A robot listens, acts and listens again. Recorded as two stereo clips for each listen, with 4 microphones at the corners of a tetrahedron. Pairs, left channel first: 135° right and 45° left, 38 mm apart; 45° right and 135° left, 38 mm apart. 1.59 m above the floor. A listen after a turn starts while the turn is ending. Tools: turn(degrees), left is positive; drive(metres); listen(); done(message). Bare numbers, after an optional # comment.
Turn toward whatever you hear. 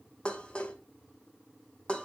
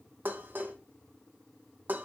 # The dishes clattering: 165° left.
turn(165)
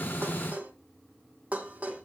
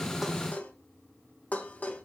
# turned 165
done("Found it: dishes clattering, straight ahead, 1 to 2 m away.")